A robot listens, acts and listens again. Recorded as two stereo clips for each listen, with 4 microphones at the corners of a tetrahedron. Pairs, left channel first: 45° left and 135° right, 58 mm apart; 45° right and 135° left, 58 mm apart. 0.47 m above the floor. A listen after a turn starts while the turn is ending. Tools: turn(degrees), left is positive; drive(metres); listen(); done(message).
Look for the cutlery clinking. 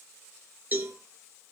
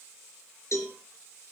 listen()
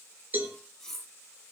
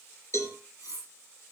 turn(degrees=-40)
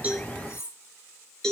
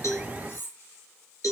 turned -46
done("Found it: cutlery clinking, straight ahead, over 4 m away.")